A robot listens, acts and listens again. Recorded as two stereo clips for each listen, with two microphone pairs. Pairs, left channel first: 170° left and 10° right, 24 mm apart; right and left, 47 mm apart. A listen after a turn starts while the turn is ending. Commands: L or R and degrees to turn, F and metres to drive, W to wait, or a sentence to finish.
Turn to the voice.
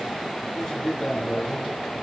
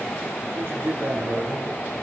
L115
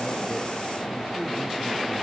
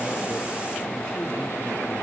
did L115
W
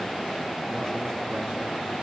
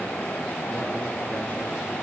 W
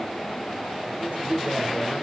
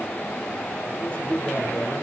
R30
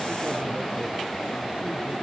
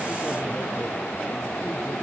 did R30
W
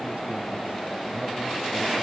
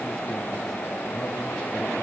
W
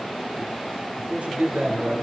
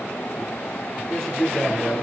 R20
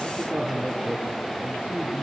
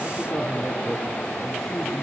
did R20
Found it: a man speaking, straight ahead.